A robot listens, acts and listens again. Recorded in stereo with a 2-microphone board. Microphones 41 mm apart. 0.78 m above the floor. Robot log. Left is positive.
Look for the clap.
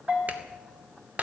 note: The clap: about 40° right or 140° right.
cmd yaw -40
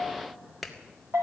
end: Facing the clap, 2 to 4 m away.